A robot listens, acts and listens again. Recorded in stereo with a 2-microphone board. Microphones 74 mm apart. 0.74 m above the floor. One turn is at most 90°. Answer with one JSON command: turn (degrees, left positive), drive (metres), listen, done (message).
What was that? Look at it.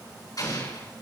{"turn": 55}
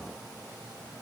{"listen": true}
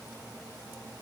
{"done": "I heard an explosion, but can't make it out now. It was about straight ahead or 70° left."}